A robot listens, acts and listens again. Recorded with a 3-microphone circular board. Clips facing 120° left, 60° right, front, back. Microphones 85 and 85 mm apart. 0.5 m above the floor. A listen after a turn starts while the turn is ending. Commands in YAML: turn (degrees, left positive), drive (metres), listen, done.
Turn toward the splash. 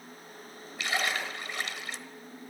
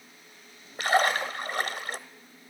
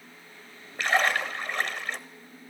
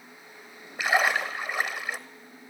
turn: -100
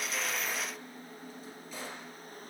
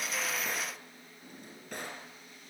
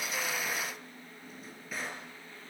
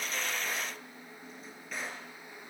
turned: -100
done: "I heard a splash from this way, but can't make it out now."